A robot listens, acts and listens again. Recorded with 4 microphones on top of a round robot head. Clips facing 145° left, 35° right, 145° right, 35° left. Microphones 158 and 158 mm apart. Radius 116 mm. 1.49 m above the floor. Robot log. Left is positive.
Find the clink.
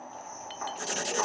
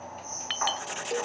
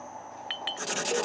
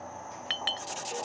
note: The clink: 15° right.
cmd yaw -15
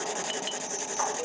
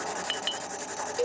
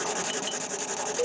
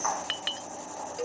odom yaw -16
end: Facing the clink.